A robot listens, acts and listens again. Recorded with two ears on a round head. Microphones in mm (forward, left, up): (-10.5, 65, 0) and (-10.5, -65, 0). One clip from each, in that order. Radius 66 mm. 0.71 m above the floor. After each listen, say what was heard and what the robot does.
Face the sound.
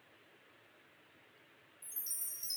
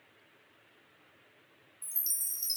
The chime: about 75° right or 105° right. Turn 75° right.
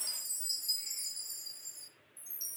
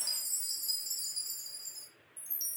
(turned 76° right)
So it is at 10° right. Turn 10° right.
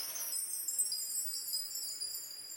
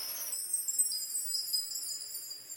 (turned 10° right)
Found it: a chime, straight ahead, 1 to 2 m away.